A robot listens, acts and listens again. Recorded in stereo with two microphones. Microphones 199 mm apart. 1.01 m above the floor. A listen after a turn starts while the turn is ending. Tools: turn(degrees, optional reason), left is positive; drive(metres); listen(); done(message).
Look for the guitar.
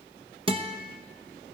turn(degrees=-25, reason="The guitar: about 25° right or 155° right.")
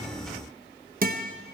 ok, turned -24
turn(degrees=-125, reason="So it is at 125° right.")
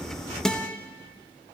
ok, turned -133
done("Found it: a guitar, straight ahead, under 1 m away.")